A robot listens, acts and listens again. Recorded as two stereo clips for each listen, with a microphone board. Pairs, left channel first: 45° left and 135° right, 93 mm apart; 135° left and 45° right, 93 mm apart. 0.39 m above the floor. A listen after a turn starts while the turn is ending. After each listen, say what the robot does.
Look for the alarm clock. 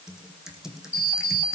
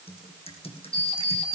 Turn 110° left.
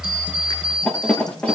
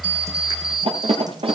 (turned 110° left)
Turn 30° right.
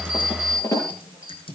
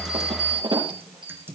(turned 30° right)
Turn 10° right.
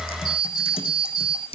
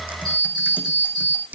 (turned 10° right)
Found it: an alarm clock, straight ahead.